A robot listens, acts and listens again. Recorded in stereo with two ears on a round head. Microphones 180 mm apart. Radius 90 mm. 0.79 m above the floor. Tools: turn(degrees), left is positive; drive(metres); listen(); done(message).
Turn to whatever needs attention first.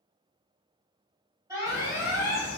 turn(degrees=-15)
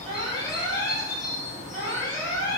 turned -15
turn(degrees=-150)
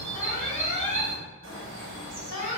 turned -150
turn(degrees=-35)
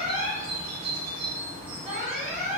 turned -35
done("Facing the alarm, 2 to 4 m away.")